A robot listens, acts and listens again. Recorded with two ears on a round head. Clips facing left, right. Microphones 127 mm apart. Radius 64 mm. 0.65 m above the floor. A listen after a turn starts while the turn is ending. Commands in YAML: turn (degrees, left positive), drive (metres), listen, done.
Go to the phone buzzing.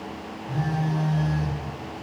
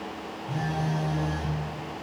turn: -25
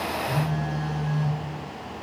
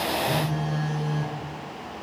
turn: -130
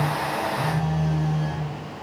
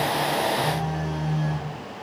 drive: 1.0
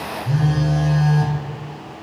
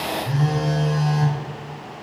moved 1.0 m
drive: 1.0
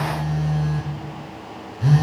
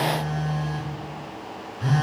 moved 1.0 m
turn: 10
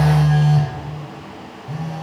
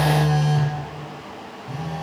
drive: 1.0
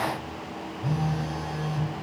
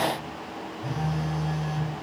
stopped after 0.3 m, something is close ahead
done: "I am next to the phone buzzing."